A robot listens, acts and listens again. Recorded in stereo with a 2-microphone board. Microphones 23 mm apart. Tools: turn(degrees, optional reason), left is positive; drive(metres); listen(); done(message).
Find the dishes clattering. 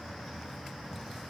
listen()
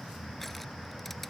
listen()
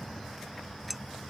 turn(degrees=-30)
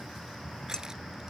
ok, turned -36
listen()
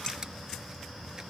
listen()
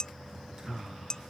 turn(degrees=30, reason="So it is at 30° left.")
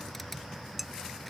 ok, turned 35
done("Facing the dishes clattering.")